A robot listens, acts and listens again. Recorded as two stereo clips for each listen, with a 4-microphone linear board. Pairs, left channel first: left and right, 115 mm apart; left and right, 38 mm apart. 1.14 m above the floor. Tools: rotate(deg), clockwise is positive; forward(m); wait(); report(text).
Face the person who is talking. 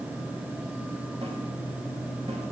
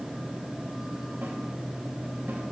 wait()
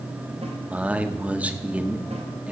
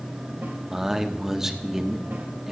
rotate(30)
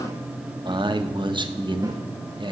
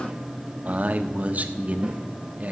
rotate(135)
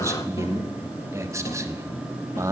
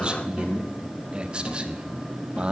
rotate(25)
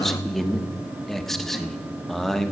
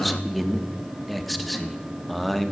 report("Facing the man speaking.")